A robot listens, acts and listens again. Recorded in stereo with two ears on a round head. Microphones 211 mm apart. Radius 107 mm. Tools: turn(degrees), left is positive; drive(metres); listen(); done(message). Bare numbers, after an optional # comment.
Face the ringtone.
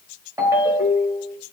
turn(-30)
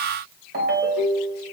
# So it is at 135° right.
turn(-135)
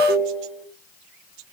# The ringtone is now 25° left.
turn(25)
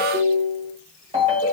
# The ringtone is now 25° right.
turn(-25)
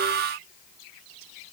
listen()
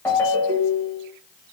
# The ringtone is now 10° left.
turn(10)
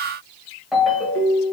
done("Facing the ringtone.")